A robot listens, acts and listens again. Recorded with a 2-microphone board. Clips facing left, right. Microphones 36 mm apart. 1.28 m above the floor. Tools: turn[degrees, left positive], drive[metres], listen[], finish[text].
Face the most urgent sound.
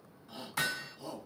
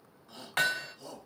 Action: turn[30]
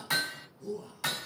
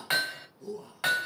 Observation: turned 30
Thought: So it is at 20° right.
Action: turn[-20]
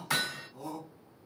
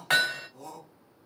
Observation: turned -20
Action: finish[Facing the shout.]